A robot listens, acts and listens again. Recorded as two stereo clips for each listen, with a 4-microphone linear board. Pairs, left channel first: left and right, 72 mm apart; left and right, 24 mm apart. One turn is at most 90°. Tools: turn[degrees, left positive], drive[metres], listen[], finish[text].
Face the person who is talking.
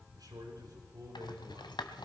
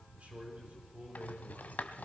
Thought: The man speaking: about 60° right or 120° right.
Action: turn[-60]
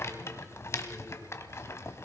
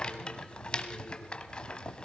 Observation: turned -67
Action: listen[]
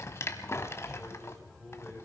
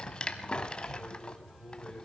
Action: finish[Facing the man speaking.]